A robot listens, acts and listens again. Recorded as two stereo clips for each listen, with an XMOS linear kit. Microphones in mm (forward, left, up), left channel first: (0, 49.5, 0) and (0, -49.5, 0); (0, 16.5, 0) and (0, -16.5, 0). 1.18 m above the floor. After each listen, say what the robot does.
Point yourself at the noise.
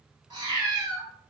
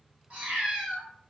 Turn 45° right.
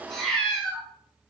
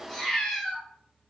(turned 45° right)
Turn 10° left.
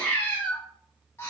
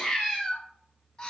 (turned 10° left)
Turn 30° left.
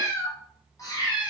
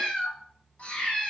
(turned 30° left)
Turn 40° left.
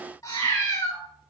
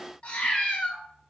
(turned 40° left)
Turn 35° left.
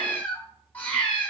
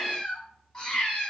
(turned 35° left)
Turn 15° left.
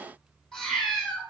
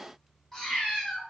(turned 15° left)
Facing the cat meowing.